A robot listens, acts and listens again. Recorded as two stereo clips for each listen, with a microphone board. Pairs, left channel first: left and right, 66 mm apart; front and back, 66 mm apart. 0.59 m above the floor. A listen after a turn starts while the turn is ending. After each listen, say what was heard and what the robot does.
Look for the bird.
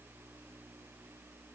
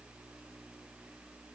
Keep listening.
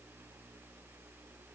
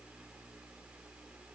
Keep listening.
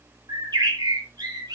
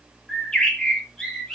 The bird: 80° right. Turn 80° right.
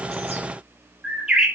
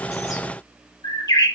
The bird is now 10° right. Turn 10° right.
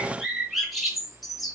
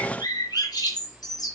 Facing the bird, over 4 m away.